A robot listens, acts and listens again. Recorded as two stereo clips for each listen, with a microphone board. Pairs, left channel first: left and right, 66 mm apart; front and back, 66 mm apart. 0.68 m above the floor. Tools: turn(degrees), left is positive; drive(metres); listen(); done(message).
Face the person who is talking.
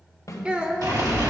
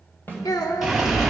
turn(degrees=-15)
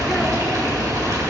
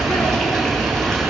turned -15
listen()
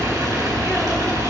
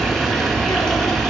listen()
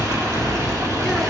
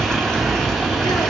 done("Facing where the child speaking came from. I can't hear it now.")